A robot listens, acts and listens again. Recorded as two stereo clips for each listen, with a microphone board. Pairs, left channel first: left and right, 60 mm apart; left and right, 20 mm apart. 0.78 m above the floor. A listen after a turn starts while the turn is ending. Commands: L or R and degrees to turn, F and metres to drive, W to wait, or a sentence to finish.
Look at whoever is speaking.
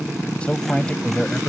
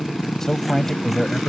L20
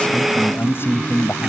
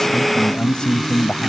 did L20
L140
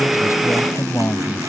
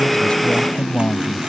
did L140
L45
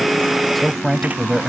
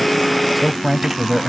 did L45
Facing the man speaking.